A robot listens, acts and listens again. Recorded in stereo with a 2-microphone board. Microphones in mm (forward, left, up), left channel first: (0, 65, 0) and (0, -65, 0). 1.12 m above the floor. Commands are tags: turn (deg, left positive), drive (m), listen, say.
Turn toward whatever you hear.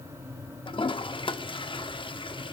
<turn deg="40"/>
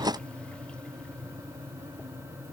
<listen/>
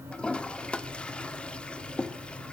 <turn deg="10"/>
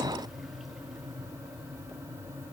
<listen/>
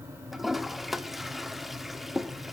<say>Facing the toilet flushing, under 1 m away.</say>